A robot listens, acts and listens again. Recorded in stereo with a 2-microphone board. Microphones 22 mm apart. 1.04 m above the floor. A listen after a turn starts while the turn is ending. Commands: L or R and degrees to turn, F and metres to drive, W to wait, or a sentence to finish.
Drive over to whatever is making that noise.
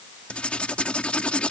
L60
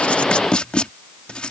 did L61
L55
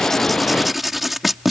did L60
F1.0
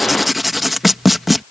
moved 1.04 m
F1.0
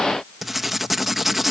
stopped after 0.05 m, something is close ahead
I am next to the writing.